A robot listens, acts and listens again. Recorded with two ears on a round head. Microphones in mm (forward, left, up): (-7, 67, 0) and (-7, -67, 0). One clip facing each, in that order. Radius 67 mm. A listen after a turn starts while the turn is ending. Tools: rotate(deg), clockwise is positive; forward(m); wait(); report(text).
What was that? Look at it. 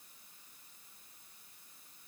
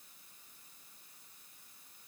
wait()
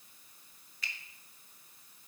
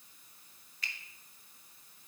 rotate(-90)
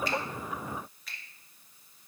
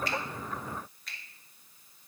report("Found it: a finger snap, straight ahead.")